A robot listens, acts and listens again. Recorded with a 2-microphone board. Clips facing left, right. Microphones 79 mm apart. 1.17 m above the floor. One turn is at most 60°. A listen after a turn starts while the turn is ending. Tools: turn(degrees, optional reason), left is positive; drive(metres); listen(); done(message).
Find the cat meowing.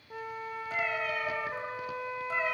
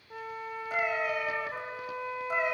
turn(degrees=-30)
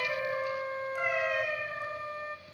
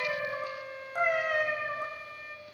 turn(degrees=-60, reason="So it is at 135° right.")
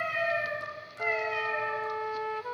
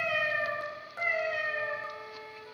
turn(degrees=-40, reason="The cat meowing is now 40° right.")
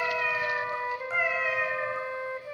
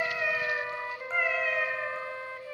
done("Found it: a cat meowing, straight ahead, over 4 m away.")